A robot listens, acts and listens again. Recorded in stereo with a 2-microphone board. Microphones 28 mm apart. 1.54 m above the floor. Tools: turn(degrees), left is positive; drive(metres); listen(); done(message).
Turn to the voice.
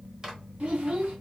turn(degrees=-55)
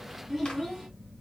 done("Found it: a child speaking, straight ahead.")